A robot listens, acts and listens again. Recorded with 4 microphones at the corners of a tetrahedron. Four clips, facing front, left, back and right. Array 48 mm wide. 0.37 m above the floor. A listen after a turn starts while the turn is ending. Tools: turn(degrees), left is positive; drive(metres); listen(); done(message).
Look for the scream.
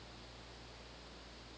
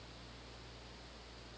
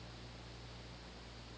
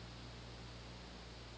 listen()
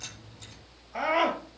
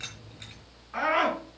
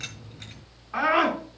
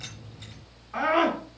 turn(degrees=180)
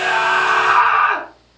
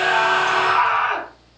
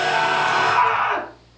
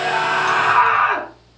turn(degrees=-25)
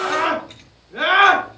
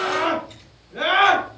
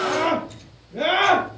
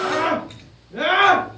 done("Found it: a scream, straight ahead.")